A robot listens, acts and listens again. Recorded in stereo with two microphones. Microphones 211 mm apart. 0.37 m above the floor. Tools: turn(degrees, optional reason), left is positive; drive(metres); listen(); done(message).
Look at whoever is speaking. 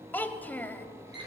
turn(degrees=30)
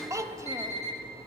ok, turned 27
turn(degrees=-15, reason="So it is at 15° right.")
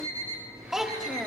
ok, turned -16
done("Facing the child speaking, under 1 m away.")